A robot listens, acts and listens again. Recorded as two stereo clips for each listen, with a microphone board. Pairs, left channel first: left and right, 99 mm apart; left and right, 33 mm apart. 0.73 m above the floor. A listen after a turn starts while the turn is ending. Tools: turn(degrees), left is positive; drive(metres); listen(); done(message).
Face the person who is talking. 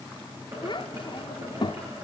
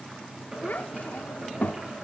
turn(degrees=50)
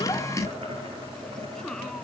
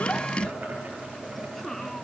listen()
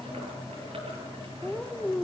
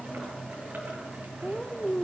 turn(degrees=10)
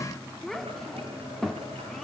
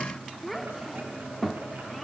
done("Found it: a child speaking, straight ahead.")